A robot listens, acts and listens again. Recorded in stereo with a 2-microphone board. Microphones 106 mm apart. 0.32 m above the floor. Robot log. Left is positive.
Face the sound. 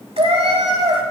note: The cat meowing: about 65° right or 115° right.
cmd yaw -65
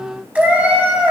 note: So it is at 15° right.
cmd yaw -15
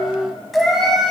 end: Found it: a cat meowing, straight ahead, 1 to 2 m away.